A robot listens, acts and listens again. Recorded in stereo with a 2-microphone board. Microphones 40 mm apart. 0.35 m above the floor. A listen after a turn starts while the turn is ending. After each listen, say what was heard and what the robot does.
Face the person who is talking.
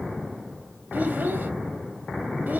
The child speaking: about 45° right or 135° right. Turn 45° right.
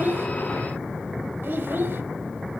So it is at 80° right. Turn 80° right.
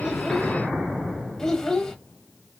The child speaking is now 15° left. Turn 15° left.
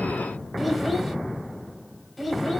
Found it: a child speaking, straight ahead, 1 to 2 m away.